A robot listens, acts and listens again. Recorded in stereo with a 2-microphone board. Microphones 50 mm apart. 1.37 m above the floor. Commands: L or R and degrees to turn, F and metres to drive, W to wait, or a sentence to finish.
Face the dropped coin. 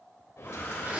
L70
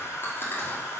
W
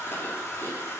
I heard a dropped coin, but can't make it out now. It was about straight ahead or 40° left.